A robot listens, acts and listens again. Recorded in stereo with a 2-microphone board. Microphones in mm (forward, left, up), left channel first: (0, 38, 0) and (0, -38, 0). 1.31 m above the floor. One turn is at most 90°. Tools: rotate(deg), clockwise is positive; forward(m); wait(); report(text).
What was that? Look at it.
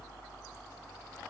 wait()
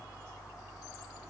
wait()
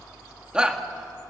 rotate(30)
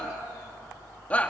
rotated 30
rotate(-20)
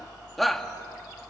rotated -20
report("Found it: a shout, straight ahead.")